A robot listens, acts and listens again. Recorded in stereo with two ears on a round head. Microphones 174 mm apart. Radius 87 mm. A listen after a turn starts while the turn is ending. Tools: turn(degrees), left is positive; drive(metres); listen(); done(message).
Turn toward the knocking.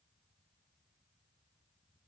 listen()
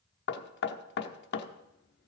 turn(degrees=55)
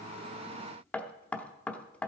turn(degrees=10)
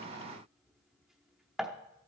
done("Facing the knocking, under 1 m away.")